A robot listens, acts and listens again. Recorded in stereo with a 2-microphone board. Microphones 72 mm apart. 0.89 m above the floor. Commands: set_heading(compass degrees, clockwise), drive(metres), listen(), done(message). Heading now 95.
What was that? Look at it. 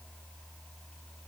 listen()
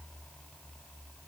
listen()
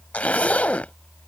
set_heading(75)
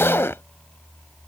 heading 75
set_heading(295)
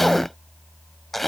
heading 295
done("Found it: a zipper, straight ahead.")